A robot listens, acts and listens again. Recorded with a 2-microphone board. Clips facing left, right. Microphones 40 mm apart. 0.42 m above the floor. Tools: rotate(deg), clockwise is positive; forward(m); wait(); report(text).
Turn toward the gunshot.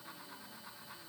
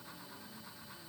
wait()
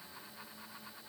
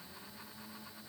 wait()
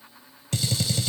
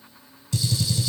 rotate(-55)
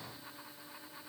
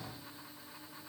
wait()
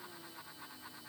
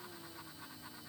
report("I heard a gunshot, but can't make it out now. It was about straight ahead or 70° left.")